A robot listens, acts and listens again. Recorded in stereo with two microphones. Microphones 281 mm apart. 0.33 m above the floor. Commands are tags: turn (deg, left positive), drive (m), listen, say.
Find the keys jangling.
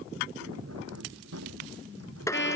<turn deg="-65"/>
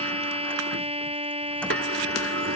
<listen/>
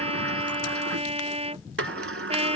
<listen/>
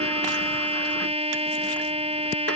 <say>I heard keys jangling, but can't make it out now. It was about straight ahead or 50° right.</say>